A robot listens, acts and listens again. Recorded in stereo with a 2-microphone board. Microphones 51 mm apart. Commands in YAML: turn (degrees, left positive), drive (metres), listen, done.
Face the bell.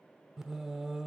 listen: true
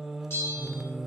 turn: 55
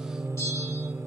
listen: true
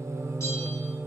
listen: true
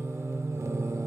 done: "I heard a bell, but can't make it out now. It was about straight ahead or 70° left."